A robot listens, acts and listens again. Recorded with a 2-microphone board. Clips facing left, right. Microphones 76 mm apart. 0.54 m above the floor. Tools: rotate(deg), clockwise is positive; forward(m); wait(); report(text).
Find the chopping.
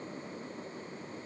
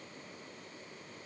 wait()
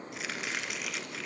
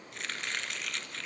rotate(-30)
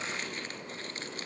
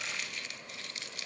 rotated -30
rotate(-140)
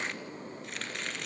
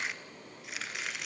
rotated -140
report("Facing the chopping.")